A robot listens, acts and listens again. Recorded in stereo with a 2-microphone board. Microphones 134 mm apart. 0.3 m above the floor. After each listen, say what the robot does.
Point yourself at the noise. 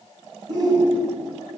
Turn 35° right.
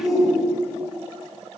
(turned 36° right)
Facing the shout.